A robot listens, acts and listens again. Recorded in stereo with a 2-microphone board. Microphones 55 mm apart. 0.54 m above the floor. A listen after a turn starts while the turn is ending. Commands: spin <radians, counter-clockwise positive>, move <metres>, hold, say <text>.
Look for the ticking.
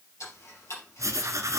spin 1.05
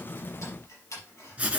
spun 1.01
spin 1.05
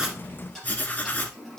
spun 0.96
say Facing the ticking, over 4 m away.